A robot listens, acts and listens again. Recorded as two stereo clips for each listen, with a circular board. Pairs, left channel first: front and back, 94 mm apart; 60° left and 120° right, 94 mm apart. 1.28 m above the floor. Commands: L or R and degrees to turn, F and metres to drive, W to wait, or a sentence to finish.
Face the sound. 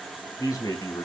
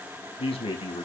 L50
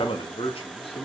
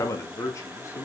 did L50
Facing the man speaking.